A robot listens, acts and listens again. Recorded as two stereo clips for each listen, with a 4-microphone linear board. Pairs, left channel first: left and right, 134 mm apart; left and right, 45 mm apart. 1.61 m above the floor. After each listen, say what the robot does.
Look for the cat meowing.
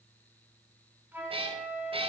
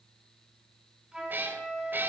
Turn 45° right.
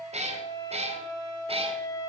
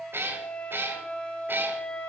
Turn 50° right.
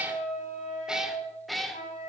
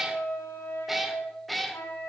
Facing the cat meowing, 1 to 2 m away.